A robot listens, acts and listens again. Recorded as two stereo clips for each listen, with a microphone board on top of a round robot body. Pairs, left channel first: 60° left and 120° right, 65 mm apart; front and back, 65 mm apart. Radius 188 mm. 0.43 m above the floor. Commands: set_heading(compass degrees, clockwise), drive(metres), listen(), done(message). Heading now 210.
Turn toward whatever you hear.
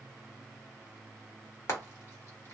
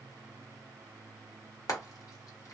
set_heading(195)
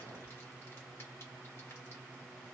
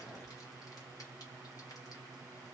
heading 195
listen()
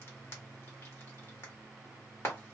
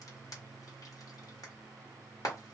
set_heading(185)
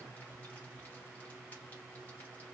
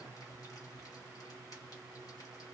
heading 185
listen()
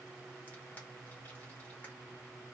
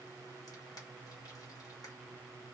listen()
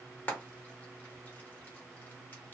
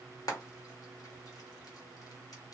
done("Found it: frying, straight ahead.")